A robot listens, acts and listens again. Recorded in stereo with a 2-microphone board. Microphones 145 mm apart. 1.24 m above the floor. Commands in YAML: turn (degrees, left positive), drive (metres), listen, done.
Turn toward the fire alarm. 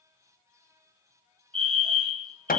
turn: -40
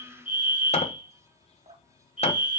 turn: -95
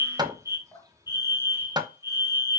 turn: -20
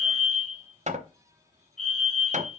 done: "Facing the fire alarm, 2 to 4 m away."